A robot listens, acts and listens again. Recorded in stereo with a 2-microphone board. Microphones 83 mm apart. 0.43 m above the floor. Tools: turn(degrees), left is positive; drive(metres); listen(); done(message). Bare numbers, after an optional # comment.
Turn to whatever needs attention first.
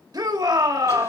# The shout: about 55° right or 125° right.
turn(-55)
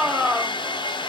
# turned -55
# So it is at 15° right.
turn(-15)
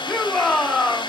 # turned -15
done("Found it: a shout, straight ahead.")